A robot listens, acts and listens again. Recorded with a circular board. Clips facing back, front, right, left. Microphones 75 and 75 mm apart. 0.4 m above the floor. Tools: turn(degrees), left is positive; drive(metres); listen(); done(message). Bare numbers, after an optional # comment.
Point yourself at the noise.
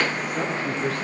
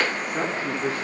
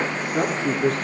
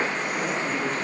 # The woman speaking: 75° right.
turn(-75)
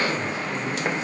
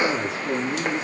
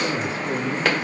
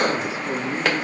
# The woman speaking is now 20° left.
turn(20)
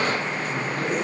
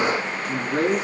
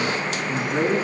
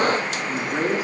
# The woman speaking is now 10° left.
turn(10)
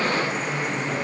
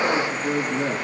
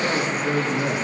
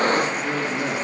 # The woman speaking is now 10° left.
turn(10)
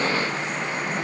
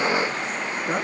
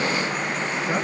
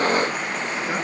listen()
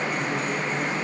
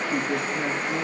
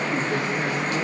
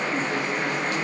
listen()
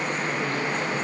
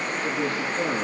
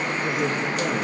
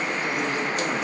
done("Facing the woman speaking, over 4 m away.")